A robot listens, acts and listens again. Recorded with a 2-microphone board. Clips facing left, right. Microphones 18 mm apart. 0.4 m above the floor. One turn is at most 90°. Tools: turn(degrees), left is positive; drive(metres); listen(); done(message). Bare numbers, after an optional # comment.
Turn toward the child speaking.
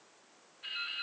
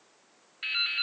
listen()
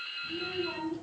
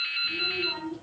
turn(-30)
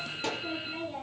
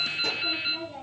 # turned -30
# So it is at 15° left.
turn(15)
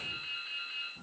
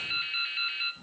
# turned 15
done("Found it: a child speaking, straight ahead, over 4 m away.")